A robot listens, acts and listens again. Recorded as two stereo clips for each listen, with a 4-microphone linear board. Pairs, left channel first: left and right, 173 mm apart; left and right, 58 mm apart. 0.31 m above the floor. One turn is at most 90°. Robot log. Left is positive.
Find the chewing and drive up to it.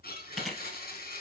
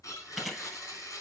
cmd yaw +30
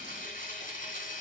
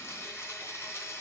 cmd idle
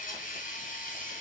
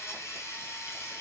cmd idle
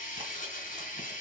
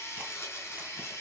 end: I heard chewing, but can't make it out now. It was about 25° right or 145° left. I did not reach it.